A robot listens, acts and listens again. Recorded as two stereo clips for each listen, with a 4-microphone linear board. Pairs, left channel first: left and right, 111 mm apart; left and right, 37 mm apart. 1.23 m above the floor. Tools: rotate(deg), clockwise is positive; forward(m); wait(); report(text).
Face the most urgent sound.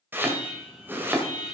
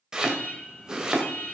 rotate(-55)
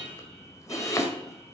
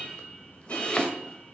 rotate(-70)
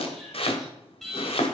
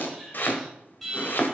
report("Found it: an alarm, straight ahead, 2 to 4 m away.")